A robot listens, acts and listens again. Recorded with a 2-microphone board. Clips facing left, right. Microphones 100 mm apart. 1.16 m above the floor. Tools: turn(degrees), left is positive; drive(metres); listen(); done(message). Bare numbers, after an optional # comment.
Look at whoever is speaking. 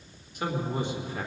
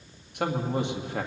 turn(-90)
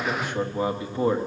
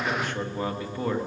# So it is at 25° left.
turn(25)
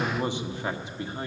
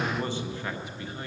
# The man speaking is now 30° left.
turn(30)
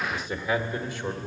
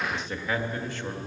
# The man speaking is now 15° left.
turn(15)
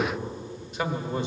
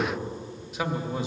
done("Found it: a man speaking, straight ahead, 1 to 2 m away.")